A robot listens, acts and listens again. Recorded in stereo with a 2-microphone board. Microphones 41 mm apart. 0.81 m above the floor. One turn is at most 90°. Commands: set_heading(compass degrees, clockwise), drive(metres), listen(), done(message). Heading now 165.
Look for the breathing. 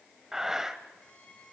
set_heading(195)
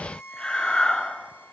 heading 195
set_heading(180)
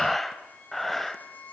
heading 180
done("Facing the breathing, under 1 m away.")